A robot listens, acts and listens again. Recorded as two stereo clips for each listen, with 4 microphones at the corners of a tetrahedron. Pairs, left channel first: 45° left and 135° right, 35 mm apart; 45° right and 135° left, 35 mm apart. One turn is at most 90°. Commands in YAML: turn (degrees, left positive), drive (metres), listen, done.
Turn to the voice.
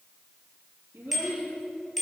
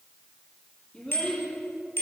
turn: -90
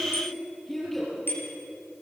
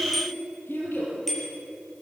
turn: -35
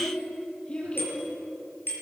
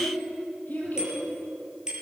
done: "Found it: a child speaking, straight ahead."